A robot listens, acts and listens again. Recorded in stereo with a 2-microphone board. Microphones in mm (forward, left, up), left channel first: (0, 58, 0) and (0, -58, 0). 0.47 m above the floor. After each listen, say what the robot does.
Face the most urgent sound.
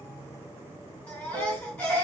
Turn 20° left.
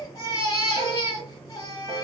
Turn 140° left.
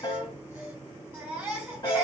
Turn 20° right.
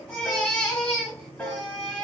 Found it: a baby crying, straight ahead.